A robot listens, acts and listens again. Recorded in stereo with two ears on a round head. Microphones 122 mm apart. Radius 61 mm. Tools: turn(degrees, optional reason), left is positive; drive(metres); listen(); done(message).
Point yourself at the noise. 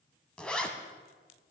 turn(degrees=30)
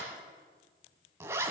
turn(degrees=-20, reason="So it is at 20° right.")
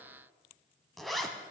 done("Facing the zipper, 1 to 2 m away.")